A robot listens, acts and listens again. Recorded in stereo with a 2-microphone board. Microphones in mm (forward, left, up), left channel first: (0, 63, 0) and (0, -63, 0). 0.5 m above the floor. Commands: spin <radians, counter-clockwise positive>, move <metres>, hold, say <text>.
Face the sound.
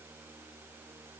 hold
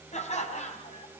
spin 1.13
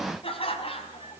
spin 0.87
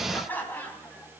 spin 0.26
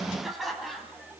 say Facing the laughter, 2 to 4 m away.